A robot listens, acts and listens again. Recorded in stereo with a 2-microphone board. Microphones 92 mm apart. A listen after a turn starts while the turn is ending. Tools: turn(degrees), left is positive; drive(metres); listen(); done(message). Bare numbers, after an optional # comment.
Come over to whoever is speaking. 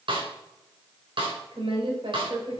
# The woman speaking: about 70° right or 110° right.
turn(-70)
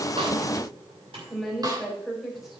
drive(1.0)
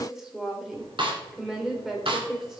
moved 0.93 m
drive(1.0)
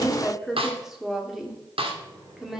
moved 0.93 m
drive(1.0)
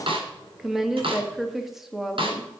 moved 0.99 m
drive(1.0)
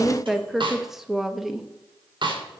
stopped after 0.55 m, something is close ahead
done("I am next to the woman speaking.")